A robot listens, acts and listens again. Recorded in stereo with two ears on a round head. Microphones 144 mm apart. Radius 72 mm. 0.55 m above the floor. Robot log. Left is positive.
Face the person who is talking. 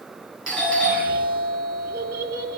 note: The child speaking: about 65° right or 115° right.
cmd yaw -65
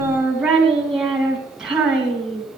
end: Facing the child speaking.